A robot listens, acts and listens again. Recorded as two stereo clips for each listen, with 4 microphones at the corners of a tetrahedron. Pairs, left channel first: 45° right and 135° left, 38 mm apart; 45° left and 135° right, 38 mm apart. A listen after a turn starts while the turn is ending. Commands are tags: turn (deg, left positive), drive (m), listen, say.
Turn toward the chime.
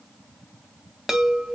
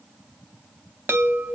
<turn deg="-145"/>
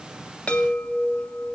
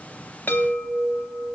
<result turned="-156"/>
<turn deg="15"/>
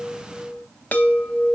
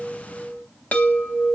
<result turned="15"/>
<say>Facing the chime, under 1 m away.</say>